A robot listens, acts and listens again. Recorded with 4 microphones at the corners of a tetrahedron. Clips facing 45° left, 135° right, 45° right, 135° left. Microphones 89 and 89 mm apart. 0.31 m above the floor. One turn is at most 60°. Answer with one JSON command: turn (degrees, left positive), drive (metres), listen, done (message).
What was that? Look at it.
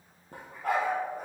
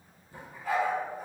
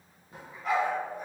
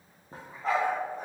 {"turn": 60}
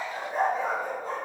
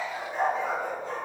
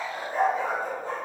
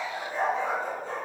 {"done": "Found it: a dog barking, straight ahead, 2 to 4 m away."}